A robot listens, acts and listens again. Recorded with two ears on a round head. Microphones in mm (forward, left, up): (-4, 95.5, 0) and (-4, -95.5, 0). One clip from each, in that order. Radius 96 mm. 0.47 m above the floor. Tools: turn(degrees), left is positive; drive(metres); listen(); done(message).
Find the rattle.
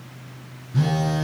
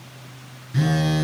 listen()
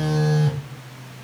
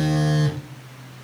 listen()
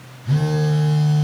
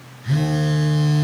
done("I can't make out a rattle, only a phone buzzing.")